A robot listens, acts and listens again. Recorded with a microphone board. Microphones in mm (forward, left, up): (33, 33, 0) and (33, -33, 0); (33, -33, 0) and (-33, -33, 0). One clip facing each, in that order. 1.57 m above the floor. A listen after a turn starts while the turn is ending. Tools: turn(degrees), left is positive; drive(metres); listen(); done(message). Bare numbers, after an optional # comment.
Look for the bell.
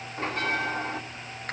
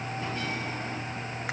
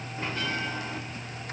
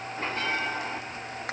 # The bell: 130° left.
turn(130)
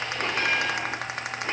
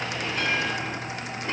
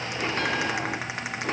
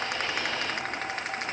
listen()
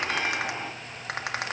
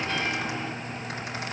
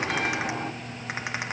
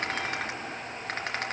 # The bell is now 20° left.
turn(20)
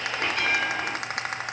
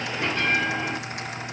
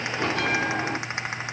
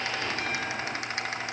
done("Found it: a bell, straight ahead, over 4 m away.")